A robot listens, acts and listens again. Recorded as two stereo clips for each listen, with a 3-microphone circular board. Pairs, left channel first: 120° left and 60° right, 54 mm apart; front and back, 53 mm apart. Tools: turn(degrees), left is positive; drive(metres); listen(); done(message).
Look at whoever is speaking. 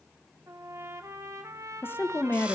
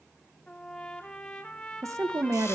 turn(degrees=165)
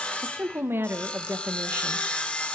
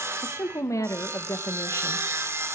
turn(degrees=-15)
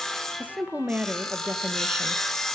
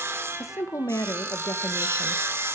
done("Found it: a woman speaking, straight ahead.")